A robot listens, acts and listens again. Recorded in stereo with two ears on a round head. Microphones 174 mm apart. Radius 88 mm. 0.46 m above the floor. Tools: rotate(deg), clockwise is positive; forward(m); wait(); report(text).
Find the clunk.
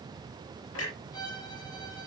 rotate(-75)
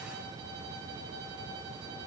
wait()
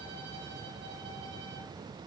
report("I heard a clunk, but can't make it out now. It was about straight ahead or 30° left.")